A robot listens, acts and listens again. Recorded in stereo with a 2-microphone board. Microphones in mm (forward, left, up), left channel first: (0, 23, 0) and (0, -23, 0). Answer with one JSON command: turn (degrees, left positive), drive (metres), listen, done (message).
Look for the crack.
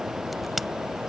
{"turn": 30}
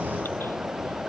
{"listen": true}
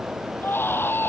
{"done": "I heard a crack, but can't make it out now. It was about 30° right or 150° left."}